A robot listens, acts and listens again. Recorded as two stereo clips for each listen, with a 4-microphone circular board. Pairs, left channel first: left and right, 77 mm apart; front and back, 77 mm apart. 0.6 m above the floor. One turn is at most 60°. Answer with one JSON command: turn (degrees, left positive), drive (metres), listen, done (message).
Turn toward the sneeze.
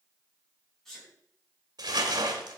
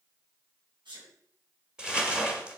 {"turn": 60}
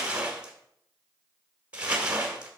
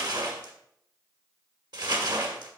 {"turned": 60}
{"turn": 60}
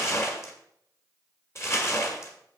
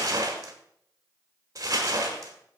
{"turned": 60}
{"turn": 55}
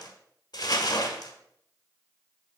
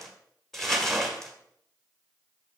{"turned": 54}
{"done": "Facing where the sneeze came from. I can't hear it now."}